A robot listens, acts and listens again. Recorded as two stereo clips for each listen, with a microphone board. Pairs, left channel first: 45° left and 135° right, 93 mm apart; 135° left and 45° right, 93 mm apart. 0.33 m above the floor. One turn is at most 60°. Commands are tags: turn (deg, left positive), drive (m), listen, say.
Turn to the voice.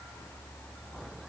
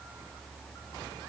<listen/>
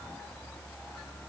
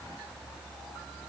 <listen/>
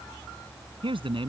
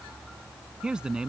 <turn deg="-60"/>
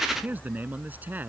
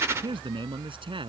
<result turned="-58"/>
<turn deg="-60"/>
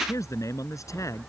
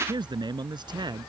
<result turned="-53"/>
<turn deg="-10"/>
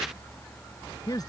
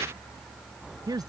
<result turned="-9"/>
<say>Found it: a man speaking, straight ahead.</say>